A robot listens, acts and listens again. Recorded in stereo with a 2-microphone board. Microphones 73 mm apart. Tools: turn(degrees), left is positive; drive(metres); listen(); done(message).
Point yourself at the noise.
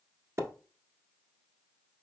turn(degrees=-45)
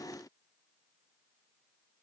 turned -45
listen()
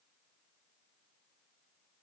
done("I heard a splash, but can't make it out now. It was about straight ahead or 90° right.")